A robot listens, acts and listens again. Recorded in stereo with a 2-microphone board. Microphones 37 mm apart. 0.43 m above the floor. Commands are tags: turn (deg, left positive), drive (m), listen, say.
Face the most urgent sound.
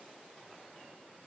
<listen/>
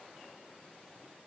<listen/>
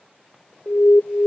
<turn deg="60"/>
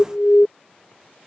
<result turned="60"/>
<turn deg="35"/>
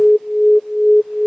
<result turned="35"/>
<turn deg="10"/>
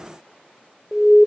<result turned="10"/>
<say>Facing the alarm.</say>